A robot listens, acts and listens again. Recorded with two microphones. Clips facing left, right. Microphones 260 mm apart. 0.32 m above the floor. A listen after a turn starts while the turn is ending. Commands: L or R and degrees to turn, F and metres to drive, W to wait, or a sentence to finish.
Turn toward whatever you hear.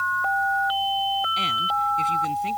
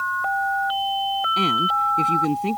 R70
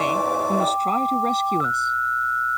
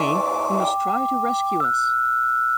Found it: a woman speaking, straight ahead.